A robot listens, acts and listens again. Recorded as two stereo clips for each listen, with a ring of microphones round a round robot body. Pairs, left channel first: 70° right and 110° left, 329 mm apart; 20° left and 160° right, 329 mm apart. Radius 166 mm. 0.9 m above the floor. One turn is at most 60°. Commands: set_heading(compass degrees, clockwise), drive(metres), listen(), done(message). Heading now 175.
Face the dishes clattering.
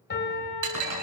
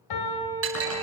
set_heading(115)
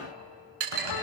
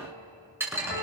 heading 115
set_heading(55)
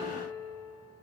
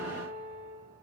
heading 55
set_heading(355)
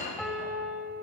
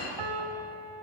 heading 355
done("Found it: dishes clattering, straight ahead, over 4 m away.")